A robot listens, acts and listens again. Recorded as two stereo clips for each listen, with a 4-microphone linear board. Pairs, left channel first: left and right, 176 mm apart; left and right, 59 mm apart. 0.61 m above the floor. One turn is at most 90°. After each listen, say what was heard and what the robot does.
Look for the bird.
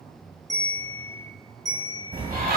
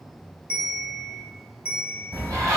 The bird: about 55° right or 125° right. Turn 55° right.
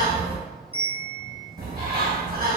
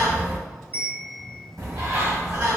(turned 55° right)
So it is at 65° right. Turn 65° right.
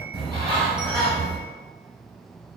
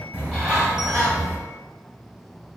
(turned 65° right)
The bird is now 20° right. Turn 20° right.
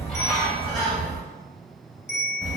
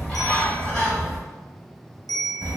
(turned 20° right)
Facing the bird, 1 to 2 m away.